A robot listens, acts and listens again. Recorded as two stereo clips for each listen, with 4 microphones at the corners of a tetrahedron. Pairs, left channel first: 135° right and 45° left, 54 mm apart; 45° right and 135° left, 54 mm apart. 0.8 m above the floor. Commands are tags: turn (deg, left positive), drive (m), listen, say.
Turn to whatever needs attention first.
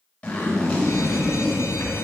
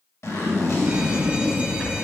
<turn deg="-155"/>
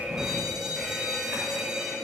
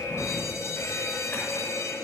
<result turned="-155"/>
<turn deg="-35"/>
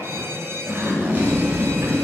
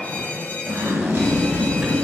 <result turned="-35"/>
<turn deg="15"/>
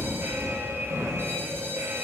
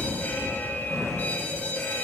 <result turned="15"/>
<turn deg="10"/>
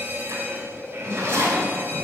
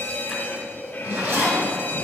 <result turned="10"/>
<say>Found it: an alarm, straight ahead.</say>